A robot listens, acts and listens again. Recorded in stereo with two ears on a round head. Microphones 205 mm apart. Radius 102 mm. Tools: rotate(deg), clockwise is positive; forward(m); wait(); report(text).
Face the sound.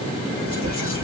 rotate(-40)
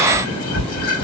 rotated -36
rotate(-105)
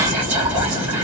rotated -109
report("Facing the whispering.")